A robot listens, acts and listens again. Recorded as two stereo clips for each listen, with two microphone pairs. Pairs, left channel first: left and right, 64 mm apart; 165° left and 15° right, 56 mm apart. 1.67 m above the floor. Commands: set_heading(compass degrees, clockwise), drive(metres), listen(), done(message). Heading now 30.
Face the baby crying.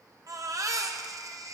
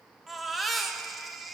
set_heading(140)
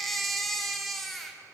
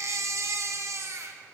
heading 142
done("Facing the baby crying.")